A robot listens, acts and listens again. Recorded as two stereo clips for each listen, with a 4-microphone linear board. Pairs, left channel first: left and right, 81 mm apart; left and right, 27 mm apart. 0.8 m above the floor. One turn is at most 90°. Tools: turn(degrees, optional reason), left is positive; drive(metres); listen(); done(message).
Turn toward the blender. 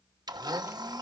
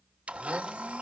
turn(degrees=-55, reason="The blender: about 55° right or 125° right.")
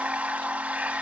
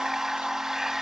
turn(degrees=-20, reason="So it is at 20° right.")
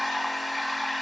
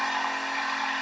done("Found it: a blender, straight ahead, 1 to 2 m away.")